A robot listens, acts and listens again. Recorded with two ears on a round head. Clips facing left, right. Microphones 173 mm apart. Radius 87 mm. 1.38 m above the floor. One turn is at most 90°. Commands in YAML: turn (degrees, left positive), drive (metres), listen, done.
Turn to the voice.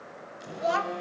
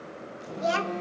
turn: -30
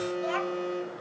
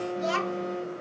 turn: -90
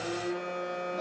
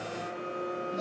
turn: -30
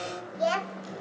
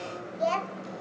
turn: 10
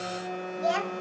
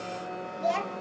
done: "Found it: a child speaking, straight ahead."